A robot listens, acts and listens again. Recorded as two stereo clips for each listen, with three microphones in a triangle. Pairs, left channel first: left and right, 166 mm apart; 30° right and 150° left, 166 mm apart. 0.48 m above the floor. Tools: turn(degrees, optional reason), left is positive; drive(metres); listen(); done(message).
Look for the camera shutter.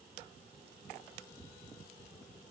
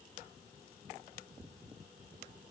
listen()
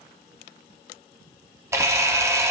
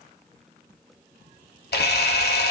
turn(degrees=-15, reason="The camera shutter: 15° right.")
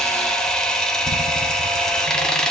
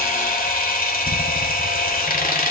done("Facing the camera shutter, under 1 m away.")